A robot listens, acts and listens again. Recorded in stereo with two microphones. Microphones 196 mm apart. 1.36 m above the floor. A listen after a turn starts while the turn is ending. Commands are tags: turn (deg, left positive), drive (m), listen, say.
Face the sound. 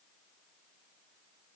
<listen/>
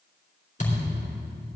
<turn deg="40"/>
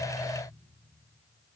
<listen/>
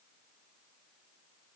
<say>I heard a thud, but can't make it out now. It was about straight ahead or 100° left.</say>